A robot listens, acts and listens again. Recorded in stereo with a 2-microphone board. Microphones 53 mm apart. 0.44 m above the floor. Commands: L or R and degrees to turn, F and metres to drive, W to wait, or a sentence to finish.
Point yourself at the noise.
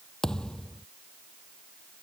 L30
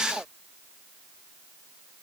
W
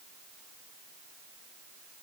I heard a thud, but can't make it out now. It was about 15° right or 135° left.